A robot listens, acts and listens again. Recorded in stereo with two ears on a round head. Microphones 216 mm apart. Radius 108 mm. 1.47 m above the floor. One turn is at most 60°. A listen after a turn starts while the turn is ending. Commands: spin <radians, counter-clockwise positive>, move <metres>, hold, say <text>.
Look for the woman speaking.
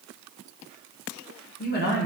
spin 0.79
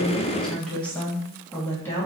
spin 0.17
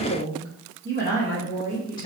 spin 0.26
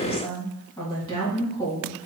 spin 0.26
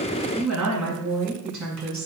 say Found it: a woman speaking, straight ahead, 2 to 4 m away.